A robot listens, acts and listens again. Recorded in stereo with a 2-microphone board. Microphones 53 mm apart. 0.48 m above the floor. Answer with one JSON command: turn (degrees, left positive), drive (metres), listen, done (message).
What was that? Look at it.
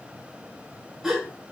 {"turn": -30}
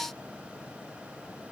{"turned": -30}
{"listen": true}
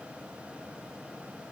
{"done": "I heard a gasp, but can't make it out now. It was about 20° left or 140° right."}